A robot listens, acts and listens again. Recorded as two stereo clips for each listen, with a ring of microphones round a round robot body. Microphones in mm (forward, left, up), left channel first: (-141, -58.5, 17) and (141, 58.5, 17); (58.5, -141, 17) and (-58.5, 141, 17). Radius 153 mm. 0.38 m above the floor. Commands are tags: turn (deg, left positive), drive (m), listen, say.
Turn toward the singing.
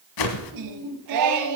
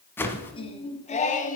<say>Found it: singing, straight ahead, 1 to 2 m away.</say>